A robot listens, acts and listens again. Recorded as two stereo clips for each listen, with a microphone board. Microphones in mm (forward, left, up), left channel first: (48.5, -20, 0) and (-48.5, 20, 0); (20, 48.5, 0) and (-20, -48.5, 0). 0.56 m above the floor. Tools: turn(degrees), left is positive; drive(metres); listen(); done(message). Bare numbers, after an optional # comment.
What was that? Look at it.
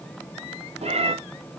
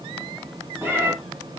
# The cat meowing: straight behind.
turn(180)
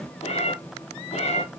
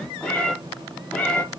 # The cat meowing is now 10° right.
turn(-10)
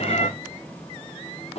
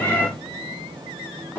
done("Found it: a cat meowing, straight ahead.")